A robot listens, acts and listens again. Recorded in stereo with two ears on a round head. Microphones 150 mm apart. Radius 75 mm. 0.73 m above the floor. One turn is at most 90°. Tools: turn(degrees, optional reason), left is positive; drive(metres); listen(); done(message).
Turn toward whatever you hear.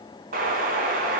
turn(degrees=-55, reason="The explosion: about 55° right or 125° right.")
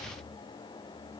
listen()
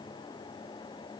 done("I heard an explosion, but can't make it out now. It was about straight ahead or 70° right.")